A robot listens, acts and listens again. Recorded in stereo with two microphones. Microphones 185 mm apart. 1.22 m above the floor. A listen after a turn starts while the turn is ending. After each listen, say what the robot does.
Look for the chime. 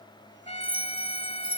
Turn 25° right.
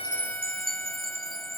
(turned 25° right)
Turn 125° right.
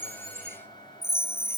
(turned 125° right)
Turn 15° left.
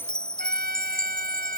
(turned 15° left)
Facing the chime.